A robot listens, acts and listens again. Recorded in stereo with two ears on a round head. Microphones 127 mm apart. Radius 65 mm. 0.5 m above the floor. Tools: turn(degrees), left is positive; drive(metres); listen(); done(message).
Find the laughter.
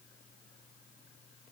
listen()
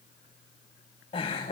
turn(degrees=45)
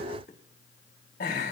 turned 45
turn(degrees=105)
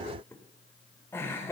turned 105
turn(degrees=20)
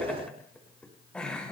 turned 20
done("Found it: laughter, straight ahead, over 4 m away.")